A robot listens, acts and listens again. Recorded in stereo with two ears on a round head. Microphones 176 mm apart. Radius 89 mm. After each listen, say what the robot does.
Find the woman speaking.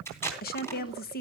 Turn 50° left.
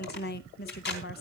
Turn 65° left.
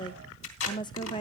Turn 25° left.
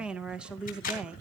Found it: a woman speaking, straight ahead.